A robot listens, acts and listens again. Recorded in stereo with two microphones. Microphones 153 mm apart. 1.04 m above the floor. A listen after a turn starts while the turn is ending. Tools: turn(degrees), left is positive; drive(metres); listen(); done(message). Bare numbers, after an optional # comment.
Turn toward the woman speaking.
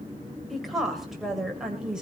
turn(-30)
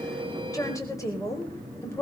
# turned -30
# So it is at 15° left.
turn(15)
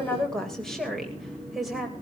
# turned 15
done("Facing the woman speaking.")